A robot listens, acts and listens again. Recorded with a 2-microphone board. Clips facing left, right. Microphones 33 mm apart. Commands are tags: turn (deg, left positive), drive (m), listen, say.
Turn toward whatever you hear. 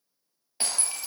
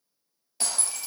<turn deg="25"/>
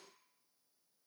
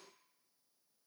<listen/>
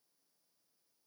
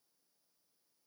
<say>I heard breaking glass, but can't make it out now. It was about straight ahead or 130° left.</say>